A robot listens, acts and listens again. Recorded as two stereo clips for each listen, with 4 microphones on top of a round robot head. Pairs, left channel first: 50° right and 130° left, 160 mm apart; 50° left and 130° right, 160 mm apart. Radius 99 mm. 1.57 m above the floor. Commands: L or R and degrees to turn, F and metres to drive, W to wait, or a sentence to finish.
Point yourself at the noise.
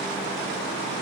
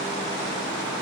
W
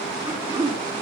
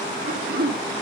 R160
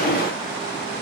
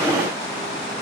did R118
R45
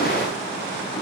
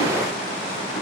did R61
L15
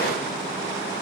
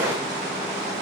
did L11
I heard throat clearing from this way, but can't make it out now.